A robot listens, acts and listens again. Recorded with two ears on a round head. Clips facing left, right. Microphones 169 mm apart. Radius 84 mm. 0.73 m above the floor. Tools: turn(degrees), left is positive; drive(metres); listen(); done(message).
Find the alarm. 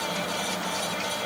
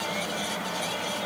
listen()
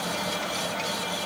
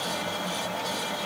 listen()
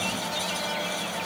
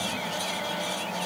done("I can't make out an alarm to turn to.")